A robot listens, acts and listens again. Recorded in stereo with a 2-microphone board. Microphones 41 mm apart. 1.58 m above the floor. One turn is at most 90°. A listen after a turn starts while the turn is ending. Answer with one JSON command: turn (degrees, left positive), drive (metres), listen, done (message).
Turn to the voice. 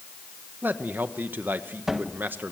{"turn": -45}
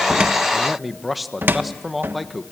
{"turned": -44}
{"done": "Found it: a man speaking, straight ahead."}